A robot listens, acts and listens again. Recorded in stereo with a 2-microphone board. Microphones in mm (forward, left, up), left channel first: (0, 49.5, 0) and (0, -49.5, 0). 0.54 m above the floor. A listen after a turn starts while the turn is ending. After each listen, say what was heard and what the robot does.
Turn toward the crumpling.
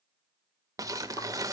The crumpling: about 35° right or 145° right. Turn 35° right.
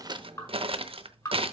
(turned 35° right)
So it is at 110° right. Turn 110° right.
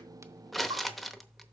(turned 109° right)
Found it: crumpling, straight ahead.